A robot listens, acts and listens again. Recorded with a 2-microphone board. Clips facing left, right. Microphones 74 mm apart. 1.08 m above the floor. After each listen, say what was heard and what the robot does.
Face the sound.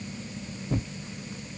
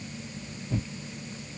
The tearing paper: about 45° left or 135° left. Turn 45° left.
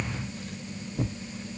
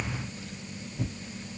So it is at 80° left. Turn 80° left.
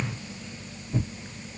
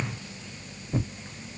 The tearing paper is now 25° right. Turn 25° right.
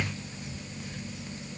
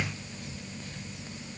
The tearing paper is now 15° left. Turn 15° left.
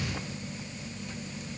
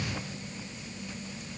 Keep listening.
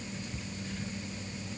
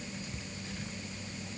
Facing the tearing paper.